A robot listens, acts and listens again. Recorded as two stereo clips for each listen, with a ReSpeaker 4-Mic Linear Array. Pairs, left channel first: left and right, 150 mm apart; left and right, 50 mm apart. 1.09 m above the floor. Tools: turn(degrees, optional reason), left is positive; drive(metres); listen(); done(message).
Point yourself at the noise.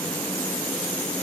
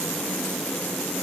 listen()
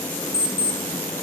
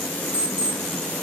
turn(degrees=90)
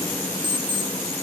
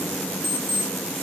done("Found it: an alarm clock, straight ahead.")